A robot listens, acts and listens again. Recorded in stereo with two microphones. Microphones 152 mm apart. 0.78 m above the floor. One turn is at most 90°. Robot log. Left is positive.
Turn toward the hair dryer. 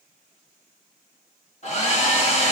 note: The hair dryer: about 45° left or 135° left.
cmd yaw +45
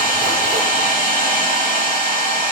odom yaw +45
note: So it is at 80° left.
cmd yaw +80
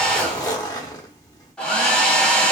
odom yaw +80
note: The hair dryer is now 10° left.
cmd yaw +10
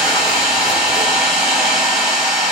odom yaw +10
end: Found it: a hair dryer, straight ahead, 1 to 2 m away.